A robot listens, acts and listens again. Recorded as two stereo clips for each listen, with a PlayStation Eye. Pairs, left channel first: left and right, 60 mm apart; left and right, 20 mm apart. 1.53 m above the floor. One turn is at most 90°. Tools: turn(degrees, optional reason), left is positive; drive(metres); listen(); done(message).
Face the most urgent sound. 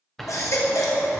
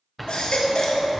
turn(degrees=70, reason="The baby crying: about 70° left or 110° left.")
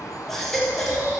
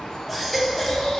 done("Facing the baby crying, 1 to 2 m away.")